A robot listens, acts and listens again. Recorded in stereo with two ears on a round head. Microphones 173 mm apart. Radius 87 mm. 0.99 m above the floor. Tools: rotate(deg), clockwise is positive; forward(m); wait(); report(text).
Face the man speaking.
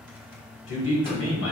rotate(-70)
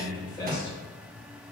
rotate(-25)
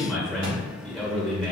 report("Found it: a man speaking, straight ahead, 1 to 2 m away.")